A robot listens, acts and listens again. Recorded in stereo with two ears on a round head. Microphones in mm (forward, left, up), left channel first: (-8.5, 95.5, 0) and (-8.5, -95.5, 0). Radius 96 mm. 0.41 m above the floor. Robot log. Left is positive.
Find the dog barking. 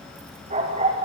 note: The dog barking: about 35° right or 145° right.
cmd yaw -35
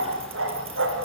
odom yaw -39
note: So it is at 115° right.
cmd yaw -115
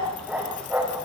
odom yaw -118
end: Found it: a dog barking, straight ahead, over 4 m away.